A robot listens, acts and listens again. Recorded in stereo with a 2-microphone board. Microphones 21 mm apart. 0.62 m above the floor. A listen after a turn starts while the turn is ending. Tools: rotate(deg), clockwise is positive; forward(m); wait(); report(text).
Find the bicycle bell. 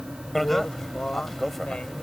rotate(-30)
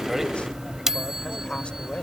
rotate(25)
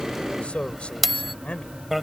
report("Found it: a bicycle bell, straight ahead.")